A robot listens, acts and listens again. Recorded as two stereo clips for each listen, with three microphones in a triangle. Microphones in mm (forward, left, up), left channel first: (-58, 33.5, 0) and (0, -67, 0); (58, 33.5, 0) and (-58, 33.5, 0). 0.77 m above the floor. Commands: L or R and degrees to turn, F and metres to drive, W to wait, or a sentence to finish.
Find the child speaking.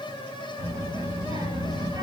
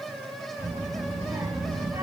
R110
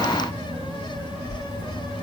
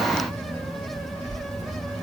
L25
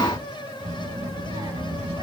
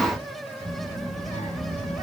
R10
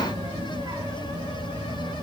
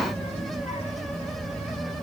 Facing the child speaking.